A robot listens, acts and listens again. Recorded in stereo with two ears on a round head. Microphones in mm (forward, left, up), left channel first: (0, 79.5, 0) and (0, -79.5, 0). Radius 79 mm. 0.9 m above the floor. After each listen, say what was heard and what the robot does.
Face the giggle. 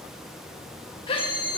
The giggle: about 30° left or 150° left. Turn 30° left.
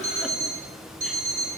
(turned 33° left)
Keep listening.
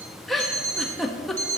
Found it: a giggle, straight ahead, 1 to 2 m away.